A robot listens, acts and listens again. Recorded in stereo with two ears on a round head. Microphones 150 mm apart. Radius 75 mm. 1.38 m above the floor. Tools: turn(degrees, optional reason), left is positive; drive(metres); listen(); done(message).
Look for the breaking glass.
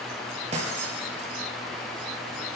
turn(degrees=-40, reason="The breaking glass: about 40° right or 140° right.")
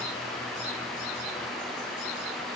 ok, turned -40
listen()
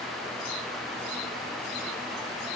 done("I heard breaking glass, but can't make it out now. It was about straight ahead or 100° right.")